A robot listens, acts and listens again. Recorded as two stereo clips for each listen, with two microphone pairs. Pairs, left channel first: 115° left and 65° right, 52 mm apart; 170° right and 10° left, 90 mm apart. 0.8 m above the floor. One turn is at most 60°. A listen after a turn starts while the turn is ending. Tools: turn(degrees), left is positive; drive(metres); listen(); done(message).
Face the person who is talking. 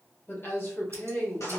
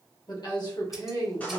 turn(degrees=60)
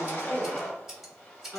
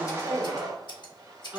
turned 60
turn(degrees=60)
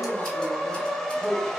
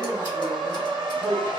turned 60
turn(degrees=60)
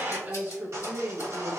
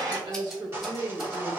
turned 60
turn(degrees=-20)
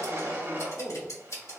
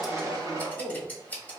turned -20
done("Found it: a woman speaking, straight ahead.")